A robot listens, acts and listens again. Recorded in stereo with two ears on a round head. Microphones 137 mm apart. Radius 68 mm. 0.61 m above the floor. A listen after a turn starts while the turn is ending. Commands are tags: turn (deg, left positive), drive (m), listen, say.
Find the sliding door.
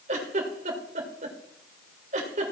<listen/>
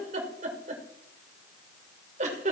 <listen/>
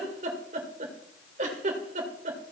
<say>I can't make out a sliding door, only a giggle.</say>